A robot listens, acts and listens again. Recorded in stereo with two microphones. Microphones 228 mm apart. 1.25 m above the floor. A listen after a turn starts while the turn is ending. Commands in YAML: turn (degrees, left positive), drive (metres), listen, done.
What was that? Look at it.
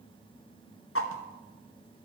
turn: 70
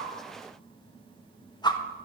turn: 20
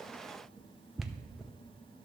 done: "Facing the whoosh, under 1 m away."